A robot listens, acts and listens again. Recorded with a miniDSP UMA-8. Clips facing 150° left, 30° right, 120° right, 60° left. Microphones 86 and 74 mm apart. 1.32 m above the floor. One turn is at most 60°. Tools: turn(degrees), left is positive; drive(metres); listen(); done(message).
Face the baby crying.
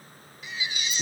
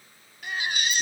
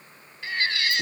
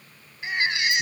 turn(degrees=-10)
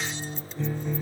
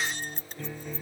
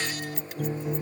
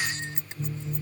listen()
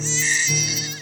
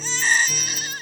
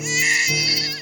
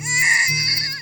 done("Facing the baby crying.")